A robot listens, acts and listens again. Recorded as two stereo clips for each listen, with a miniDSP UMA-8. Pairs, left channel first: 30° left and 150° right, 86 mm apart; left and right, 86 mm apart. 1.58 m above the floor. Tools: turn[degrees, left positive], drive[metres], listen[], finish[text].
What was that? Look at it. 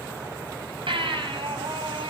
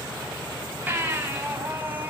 Thought: The baby crying: 160° right.
Action: turn[-160]
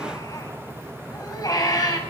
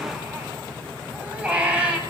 Thought: The baby crying is now 15° right.
Action: turn[-15]
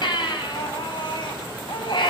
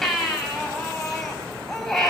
Action: finish[Found it: a baby crying, straight ahead, over 4 m away.]